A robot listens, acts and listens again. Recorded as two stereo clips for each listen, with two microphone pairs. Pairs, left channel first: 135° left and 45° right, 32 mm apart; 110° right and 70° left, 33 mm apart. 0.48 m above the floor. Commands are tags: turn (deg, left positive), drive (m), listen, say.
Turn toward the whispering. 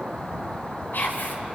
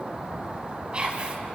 <turn deg="135"/>
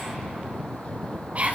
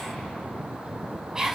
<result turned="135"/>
<say>Found it: whispering, straight ahead.</say>